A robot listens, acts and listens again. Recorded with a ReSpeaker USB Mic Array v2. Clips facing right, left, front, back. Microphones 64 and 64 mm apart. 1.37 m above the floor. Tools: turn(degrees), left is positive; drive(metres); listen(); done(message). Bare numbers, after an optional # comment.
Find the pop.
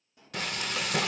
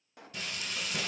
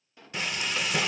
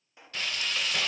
# The pop: 110° left.
turn(110)
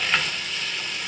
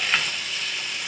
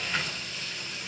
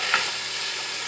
done("Facing where the pop came from. I can't hear it now.")